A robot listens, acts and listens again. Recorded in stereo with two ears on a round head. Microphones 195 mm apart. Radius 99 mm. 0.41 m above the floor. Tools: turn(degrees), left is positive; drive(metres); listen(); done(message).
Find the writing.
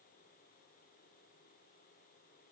listen()
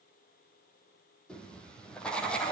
turn(degrees=30)
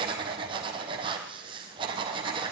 turn(degrees=-25)
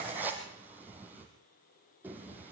turn(degrees=-10)
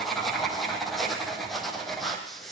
done("Facing the writing, 2 to 4 m away.")